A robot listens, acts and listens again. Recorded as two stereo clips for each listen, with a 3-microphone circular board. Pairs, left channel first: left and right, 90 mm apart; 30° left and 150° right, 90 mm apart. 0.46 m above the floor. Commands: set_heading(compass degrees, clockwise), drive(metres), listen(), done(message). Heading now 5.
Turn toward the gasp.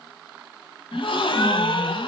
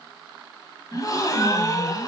set_heading(290)
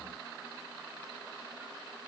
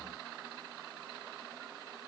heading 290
done("I heard a gasp from this way, but can't make it out now.")